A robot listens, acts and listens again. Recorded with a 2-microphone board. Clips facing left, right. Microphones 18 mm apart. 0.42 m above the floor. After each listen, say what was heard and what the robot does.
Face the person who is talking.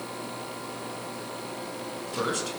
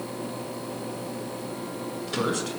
Turn 30° left.
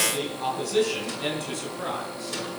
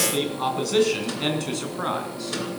So it is at 25° right. Turn 25° right.
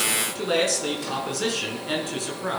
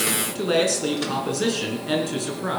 Found it: a man speaking, straight ahead, over 4 m away.